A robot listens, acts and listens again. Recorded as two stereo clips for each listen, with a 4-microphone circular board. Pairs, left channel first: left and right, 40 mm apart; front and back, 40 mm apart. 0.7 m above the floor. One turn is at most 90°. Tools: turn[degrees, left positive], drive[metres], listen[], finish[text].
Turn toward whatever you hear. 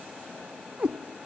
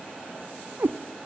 Thought: The cat meowing: 155° right.
Action: turn[-90]
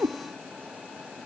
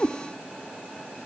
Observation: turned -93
Thought: The cat meowing is now 65° right.
Action: turn[-65]
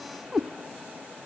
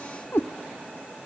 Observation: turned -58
Action: finish[Found it: a cat meowing, straight ahead, under 1 m away.]